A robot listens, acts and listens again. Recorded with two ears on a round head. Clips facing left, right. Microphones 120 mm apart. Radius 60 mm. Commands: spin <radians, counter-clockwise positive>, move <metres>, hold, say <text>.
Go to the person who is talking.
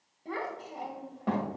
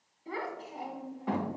spin 0.96
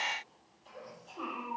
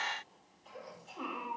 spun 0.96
move 1.0
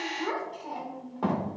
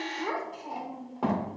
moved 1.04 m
move 1.0
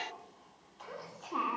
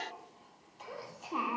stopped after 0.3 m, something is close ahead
spin -0.17
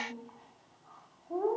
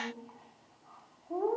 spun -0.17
say I am next to the child speaking.